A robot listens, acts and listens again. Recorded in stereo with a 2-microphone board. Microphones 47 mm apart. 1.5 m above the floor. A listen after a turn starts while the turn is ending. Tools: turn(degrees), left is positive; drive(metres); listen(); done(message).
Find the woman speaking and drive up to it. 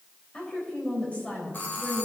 turn(degrees=30)
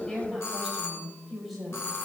drive(metres=1.0)
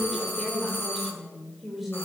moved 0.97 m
drive(metres=1.0)
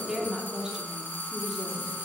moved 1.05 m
turn(degrees=-10)
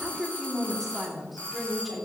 drive(metres=1.0)
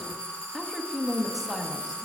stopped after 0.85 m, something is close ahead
done("I am next to the woman speaking.")